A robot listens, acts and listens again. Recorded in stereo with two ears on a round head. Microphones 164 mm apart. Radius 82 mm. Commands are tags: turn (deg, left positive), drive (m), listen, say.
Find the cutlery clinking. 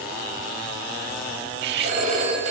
<turn deg="-60"/>
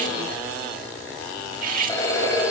<turn deg="-50"/>
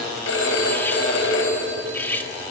<turn deg="10"/>
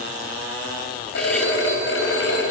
<listen/>
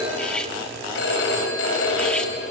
<listen/>
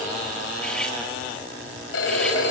<say>Facing where the cutlery clinking came from. I can't hear it now.</say>